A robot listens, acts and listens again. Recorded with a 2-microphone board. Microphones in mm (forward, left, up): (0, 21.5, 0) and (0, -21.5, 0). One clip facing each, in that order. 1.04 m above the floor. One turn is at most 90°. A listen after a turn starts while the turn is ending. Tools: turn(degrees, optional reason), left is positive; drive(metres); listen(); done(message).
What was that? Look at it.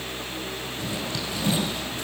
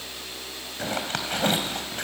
turn(degrees=-50, reason="The zipper: about 50° right or 130° right.")
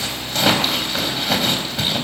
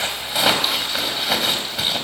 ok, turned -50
done("Facing the zipper, 2 to 4 m away.")